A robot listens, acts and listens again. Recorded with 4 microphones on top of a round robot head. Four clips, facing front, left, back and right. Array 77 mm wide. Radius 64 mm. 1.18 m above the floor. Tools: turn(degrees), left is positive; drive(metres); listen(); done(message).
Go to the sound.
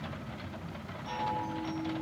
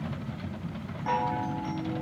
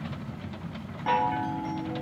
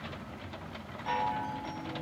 turn(degrees=160)
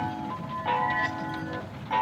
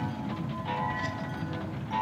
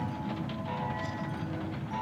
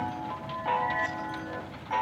turn(degrees=-35)
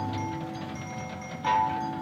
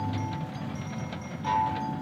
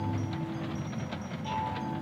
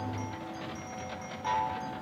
turn(degrees=-10)
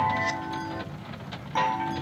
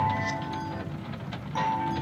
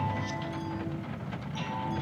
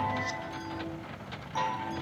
drive(metres=1.0)
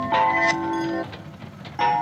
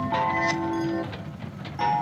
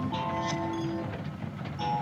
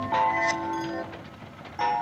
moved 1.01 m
turn(degrees=-15)
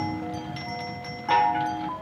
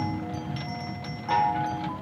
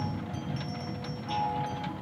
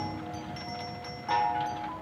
drive(metres=1.0)
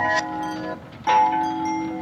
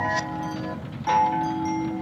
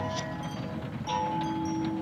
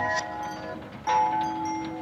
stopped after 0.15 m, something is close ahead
done("Arrived at the chime, straight ahead.")